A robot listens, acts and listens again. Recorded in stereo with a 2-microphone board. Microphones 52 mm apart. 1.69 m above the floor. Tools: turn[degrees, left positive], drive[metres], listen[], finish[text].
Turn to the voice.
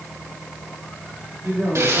Thought: The man speaking: about 65° right or 115° right.
Action: turn[-65]
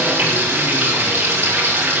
Action: listen[]
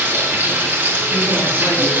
Action: listen[]
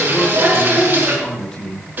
Thought: So it is at 15° left.
Action: turn[15]
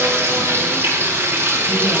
Action: listen[]
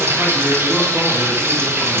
Action: listen[]
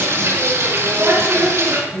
Action: finish[Found it: a man speaking, straight ahead, 2 to 4 m away.]